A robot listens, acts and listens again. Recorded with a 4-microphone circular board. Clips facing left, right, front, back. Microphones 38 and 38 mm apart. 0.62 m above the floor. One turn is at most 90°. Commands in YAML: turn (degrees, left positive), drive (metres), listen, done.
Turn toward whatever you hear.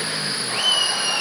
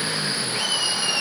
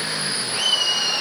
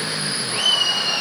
turn: 90
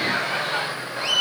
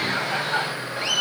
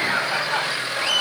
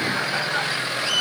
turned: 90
done: "Found it: laughter, straight ahead, 1 to 2 m away."